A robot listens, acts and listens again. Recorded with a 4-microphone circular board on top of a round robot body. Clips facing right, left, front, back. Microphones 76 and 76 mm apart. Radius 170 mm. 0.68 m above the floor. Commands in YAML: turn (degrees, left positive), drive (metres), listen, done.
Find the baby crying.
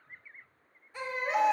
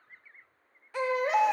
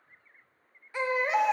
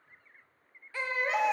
turn: 70
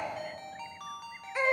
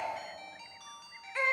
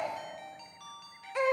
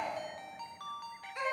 turn: -10
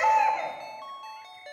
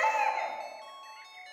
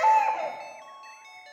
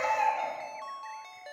done: "Found it: a baby crying, straight ahead."